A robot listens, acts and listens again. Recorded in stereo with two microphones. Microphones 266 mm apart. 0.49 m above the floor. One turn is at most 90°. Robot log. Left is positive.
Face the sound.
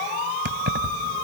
note: The keys jangling: about 40° right or 140° right.
cmd yaw -40
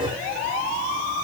cmd idle
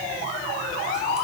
cmd idle
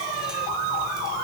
end: I heard keys jangling, but can't make it out now. It was about straight ahead or 100° right.